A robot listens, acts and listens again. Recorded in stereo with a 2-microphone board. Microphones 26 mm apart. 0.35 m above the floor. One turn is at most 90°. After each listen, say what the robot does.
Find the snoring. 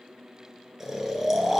Turn 30° right.
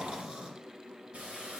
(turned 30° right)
Turn 90° right.
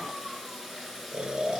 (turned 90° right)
Turn 40° right.
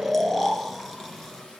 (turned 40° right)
Facing the snoring.